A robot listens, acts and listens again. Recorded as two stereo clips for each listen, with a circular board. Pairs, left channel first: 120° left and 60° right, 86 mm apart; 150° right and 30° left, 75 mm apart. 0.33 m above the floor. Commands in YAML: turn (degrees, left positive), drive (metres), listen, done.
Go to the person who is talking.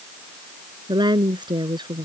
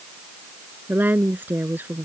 turn: -35
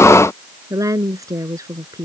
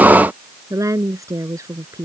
turn: -10
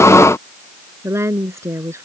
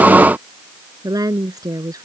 drive: 1.0
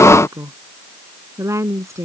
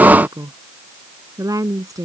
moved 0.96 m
drive: 1.0
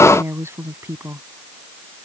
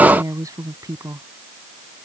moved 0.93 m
drive: 1.0
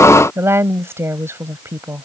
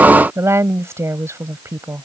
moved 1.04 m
turn: -10
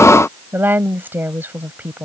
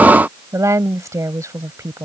drive: 1.0
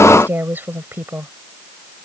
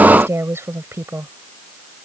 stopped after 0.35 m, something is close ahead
done: "I am next to the woman speaking."